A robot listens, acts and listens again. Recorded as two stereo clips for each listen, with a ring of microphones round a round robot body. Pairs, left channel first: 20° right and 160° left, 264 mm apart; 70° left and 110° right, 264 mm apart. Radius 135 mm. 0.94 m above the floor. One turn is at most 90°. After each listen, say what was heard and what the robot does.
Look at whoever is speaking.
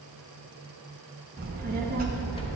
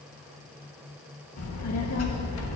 The child speaking: 100° left. Turn 90° left.
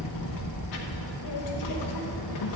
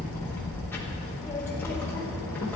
The child speaking is now 15° right. Turn 15° right.
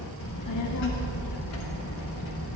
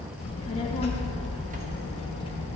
Facing the child speaking, 1 to 2 m away.